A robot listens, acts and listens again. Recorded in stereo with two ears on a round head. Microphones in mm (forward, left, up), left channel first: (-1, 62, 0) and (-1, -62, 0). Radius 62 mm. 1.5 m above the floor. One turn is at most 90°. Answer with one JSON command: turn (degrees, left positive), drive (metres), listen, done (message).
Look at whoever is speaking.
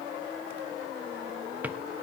{"listen": true}
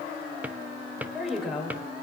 {"turn": 30}
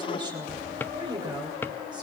{"turn": -35}
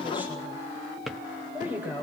{"turn": -15}
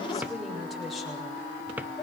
{"done": "Facing the woman speaking, over 4 m away."}